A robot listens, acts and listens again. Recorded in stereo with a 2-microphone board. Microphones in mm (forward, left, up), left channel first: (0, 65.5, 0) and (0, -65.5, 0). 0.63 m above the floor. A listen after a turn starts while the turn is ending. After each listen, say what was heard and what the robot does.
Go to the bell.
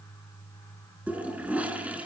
Keep listening.
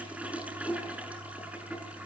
Keep listening.
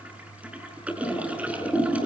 I can't make out a bell, only a toilet flushing.